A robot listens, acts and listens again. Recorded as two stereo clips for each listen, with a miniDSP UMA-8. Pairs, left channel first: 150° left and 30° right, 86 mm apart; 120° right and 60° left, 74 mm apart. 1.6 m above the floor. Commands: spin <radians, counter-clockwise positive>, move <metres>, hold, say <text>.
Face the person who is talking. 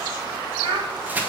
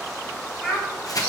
spin -0.35
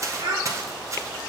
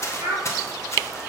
spin 0.26
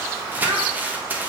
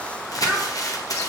hold
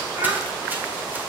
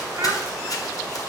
hold
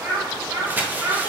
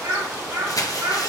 spin 0.79
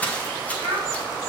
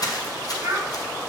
say Found it: a child speaking, straight ahead.